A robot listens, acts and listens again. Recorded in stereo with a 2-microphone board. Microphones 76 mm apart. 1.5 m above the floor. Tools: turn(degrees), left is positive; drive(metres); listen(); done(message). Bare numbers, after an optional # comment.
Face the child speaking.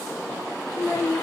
# The child speaking: about 30° left or 150° left.
turn(30)
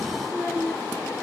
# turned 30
done("Facing the child speaking.")